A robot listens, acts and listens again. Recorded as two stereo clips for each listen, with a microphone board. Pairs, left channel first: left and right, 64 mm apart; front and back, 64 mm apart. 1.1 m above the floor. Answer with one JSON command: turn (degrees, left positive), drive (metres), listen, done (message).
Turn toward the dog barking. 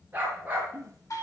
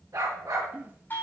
{"turn": -155}
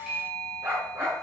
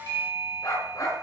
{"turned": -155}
{"turn": -35}
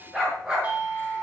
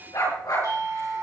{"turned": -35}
{"turn": -10}
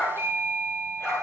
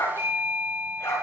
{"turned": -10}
{"done": "Found it: a dog barking, straight ahead, over 4 m away."}